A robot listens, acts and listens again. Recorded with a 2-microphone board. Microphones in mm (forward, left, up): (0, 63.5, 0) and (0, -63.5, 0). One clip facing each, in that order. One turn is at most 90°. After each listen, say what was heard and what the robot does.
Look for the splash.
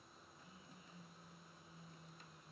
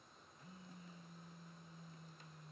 Keep listening.
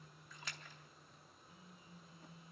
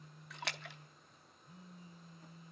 The splash: about 70° right or 110° right. Turn 70° right.
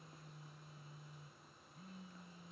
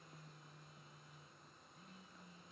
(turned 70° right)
Keep listening.
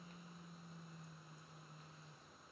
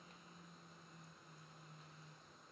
I heard a splash, but can't make it out now. It was about straight ahead or 40° right.